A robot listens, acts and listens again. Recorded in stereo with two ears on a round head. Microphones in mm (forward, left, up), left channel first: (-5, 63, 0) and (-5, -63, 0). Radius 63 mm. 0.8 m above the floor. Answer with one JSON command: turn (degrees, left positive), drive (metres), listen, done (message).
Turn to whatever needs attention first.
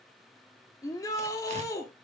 {"turn": 25}
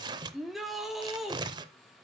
{"done": "Facing the shout."}